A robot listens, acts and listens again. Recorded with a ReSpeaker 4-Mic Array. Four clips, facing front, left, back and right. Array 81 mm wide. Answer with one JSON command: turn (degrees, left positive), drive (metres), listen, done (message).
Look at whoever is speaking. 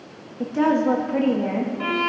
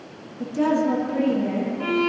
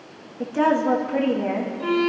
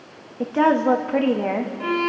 {"turn": -95}
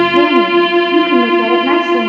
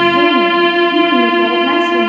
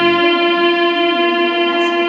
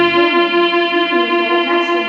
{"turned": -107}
{"turn": 10}
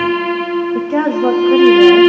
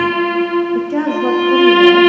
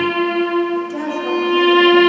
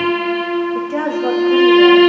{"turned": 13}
{"done": "Facing the woman speaking."}